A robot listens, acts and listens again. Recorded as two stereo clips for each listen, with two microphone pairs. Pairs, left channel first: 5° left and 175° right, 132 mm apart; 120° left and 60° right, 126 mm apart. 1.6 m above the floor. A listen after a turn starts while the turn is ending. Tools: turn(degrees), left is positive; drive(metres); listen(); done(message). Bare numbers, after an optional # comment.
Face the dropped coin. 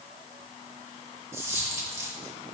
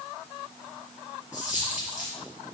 # The dropped coin: 115° left.
turn(115)
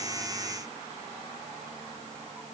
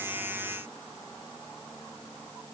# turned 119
done("Facing where the dropped coin came from. I can't hear it now.")